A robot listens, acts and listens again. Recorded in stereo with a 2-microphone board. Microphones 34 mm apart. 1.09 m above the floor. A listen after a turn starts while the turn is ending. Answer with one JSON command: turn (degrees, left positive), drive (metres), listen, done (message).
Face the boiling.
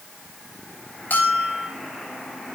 {"listen": true}
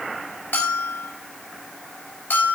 {"listen": true}
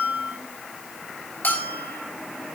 {"done": "I can't make out boiling, only a bell."}